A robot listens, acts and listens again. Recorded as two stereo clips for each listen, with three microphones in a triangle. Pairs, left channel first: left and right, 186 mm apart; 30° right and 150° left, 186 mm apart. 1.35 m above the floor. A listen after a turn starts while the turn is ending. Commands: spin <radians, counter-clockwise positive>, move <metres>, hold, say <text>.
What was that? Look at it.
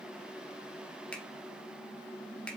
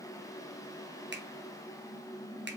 spin 3.05
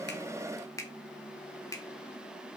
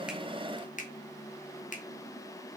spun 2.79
spin 0.26
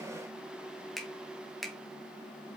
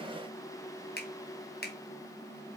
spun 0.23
say Facing the finger snap, 1 to 2 m away.